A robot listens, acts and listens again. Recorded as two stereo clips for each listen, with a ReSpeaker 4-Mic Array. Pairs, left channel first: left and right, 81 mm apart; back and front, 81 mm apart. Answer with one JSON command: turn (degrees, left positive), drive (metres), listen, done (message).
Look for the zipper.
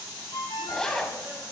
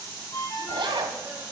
{"done": "Found it: a zipper, straight ahead, 1 to 2 m away."}